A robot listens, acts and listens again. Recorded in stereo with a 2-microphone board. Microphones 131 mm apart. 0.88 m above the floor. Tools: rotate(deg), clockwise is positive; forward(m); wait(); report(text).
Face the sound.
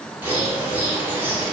rotate(30)
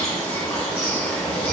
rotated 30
rotate(-15)
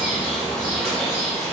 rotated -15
report("Facing the bird.")